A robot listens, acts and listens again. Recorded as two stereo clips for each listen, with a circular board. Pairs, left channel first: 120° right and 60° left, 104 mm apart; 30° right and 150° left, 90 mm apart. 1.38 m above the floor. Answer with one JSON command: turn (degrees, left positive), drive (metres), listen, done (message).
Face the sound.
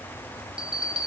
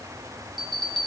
{"turn": 140}
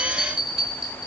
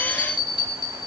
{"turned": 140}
{"turn": -25}
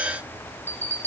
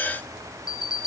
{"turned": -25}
{"done": "Found it: a bell, straight ahead."}